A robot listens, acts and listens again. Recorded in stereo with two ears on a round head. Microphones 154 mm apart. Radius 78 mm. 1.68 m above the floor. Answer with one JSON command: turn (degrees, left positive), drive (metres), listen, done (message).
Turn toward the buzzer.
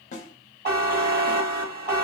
{"turn": -65}
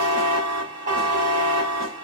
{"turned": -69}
{"turn": -45}
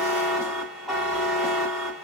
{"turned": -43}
{"done": "Found it: a buzzer, straight ahead."}